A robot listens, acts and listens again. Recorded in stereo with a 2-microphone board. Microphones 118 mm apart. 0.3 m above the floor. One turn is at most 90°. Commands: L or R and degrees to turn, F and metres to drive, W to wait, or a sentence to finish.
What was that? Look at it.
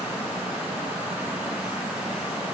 W
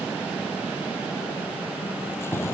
L20
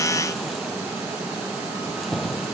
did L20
Found it: keys jangling, straight ahead.